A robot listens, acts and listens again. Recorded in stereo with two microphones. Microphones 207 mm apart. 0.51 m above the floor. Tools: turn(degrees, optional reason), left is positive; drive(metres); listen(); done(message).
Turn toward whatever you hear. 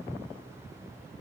listen()
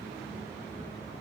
listen()
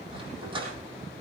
turn(degrees=-25, reason="The dog barking: about 25° right or 155° right.")
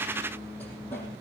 listen()
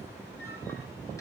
listen()
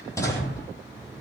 turn(degrees=15, reason="So it is at 15° left.")
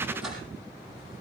done("Found it: a dog barking, straight ahead, over 4 m away.")